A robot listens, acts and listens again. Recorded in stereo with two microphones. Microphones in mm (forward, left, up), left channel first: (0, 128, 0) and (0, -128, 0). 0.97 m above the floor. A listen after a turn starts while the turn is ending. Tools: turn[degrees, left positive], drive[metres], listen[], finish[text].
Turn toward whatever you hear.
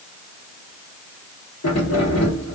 Action: turn[90]
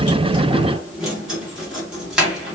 Action: finish[Found it: keys jangling, straight ahead, 1 to 2 m away.]